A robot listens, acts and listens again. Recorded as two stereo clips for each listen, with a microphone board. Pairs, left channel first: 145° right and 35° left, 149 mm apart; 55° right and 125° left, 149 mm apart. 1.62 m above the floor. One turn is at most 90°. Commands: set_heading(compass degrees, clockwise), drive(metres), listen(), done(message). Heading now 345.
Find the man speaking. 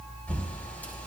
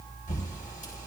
listen()
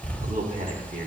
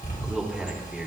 set_heading(310)
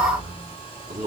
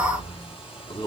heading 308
done("Found it: a man speaking, straight ahead.")